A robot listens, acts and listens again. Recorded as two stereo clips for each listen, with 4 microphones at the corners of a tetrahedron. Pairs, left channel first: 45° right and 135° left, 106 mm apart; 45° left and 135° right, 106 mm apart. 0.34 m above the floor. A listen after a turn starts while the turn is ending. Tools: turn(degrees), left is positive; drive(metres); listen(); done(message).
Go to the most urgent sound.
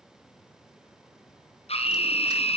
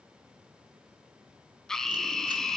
turn(degrees=-40)
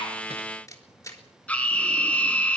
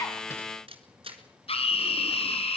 turn(degrees=30)
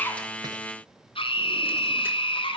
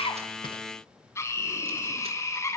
turn(degrees=-15)
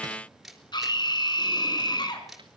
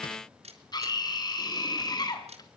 drive(metres=1.0)
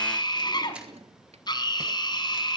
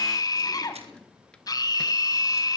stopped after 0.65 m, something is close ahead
done("Something is in my way. I am facing the scream but have not reached it.")